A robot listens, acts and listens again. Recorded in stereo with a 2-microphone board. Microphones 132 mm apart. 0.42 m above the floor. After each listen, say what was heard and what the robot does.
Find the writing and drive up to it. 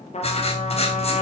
The writing: about 50° left or 130° left. Turn 50° left.
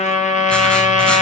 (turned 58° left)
Keep listening.
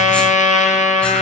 Keep listening.
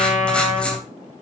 So it is at 10° left. Turn 10° left.
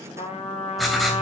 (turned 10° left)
Drive 1.0 m forward.
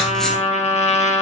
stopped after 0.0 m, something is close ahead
Keep listening.
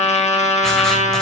Keep listening.
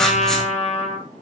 Facing where the writing came from. I can't hear it now. I did not reach it.